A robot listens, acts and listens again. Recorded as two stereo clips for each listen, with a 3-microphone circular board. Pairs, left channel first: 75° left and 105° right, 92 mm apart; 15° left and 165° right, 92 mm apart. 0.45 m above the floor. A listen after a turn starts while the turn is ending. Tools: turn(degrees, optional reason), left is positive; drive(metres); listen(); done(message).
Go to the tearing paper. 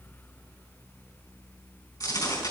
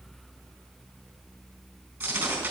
turn(degrees=120, reason="The tearing paper: 120° left.")
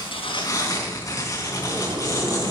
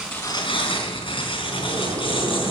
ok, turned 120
turn(degrees=15, reason="The tearing paper is now 15° left.")
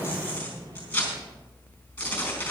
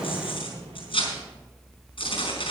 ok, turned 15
drive(metres=1.0)
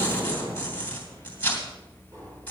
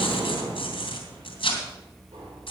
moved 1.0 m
drive(metres=1.0)
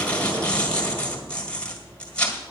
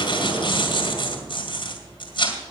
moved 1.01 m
drive(metres=1.0)
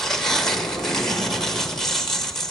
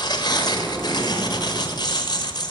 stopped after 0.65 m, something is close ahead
turn(degrees=-10, reason="The tearing paper is now 10° right.")
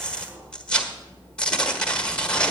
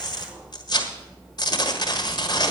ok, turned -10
done("Arrived at the tearing paper, straight ahead.")